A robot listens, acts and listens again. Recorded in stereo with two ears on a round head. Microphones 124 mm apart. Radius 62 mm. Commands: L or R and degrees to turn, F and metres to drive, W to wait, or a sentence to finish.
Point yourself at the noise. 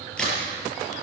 L30
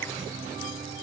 W
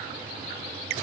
I heard a crack, but can't make it out now. It was about 25° right or 145° left.